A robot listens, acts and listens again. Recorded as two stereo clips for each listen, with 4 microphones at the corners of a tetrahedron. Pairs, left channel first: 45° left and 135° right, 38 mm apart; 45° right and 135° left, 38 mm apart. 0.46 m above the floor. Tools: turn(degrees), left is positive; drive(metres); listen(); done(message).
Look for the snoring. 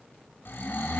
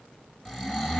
turn(degrees=30)
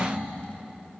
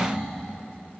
listen()
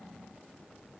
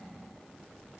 listen()
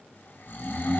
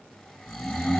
turn(degrees=15)
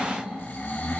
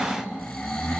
done("Facing the snoring, 2 to 4 m away.")